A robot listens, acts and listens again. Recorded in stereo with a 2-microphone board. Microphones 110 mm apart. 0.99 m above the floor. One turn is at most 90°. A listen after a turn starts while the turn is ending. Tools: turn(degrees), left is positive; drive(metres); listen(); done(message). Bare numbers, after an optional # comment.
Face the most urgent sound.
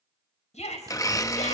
turn(90)
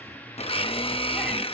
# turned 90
listen()
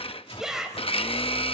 done("Found it: a shout, straight ahead.")